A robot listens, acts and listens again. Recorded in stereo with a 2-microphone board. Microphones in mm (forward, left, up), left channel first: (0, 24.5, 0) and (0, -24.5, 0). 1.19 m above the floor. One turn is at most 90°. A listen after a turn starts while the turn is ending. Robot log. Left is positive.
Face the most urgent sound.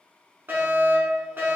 note: The fire alarm: about 50° right or 130° right.
cmd yaw -50
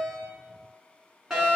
note: So it is at 15° right.
cmd yaw -15
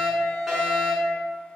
end: Facing the fire alarm.